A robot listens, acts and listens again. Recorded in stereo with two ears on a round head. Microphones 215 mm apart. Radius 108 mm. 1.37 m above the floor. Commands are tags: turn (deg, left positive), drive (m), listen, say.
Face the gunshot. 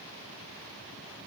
<listen/>
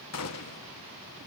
<turn deg="70"/>
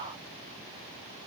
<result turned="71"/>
<listen/>
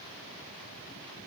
<say>I heard a gunshot, but can't make it out now. It was about straight ahead or 40° left.</say>